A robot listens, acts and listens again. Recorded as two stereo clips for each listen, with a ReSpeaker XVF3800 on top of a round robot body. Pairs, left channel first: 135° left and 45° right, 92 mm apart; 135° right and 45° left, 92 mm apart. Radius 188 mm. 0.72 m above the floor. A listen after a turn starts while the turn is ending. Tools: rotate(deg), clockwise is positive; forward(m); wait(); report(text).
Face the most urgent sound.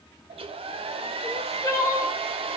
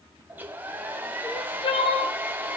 rotate(170)
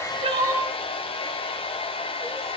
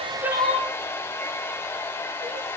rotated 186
rotate(-20)
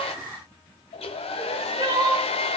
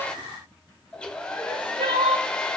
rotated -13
report("Facing the crying.")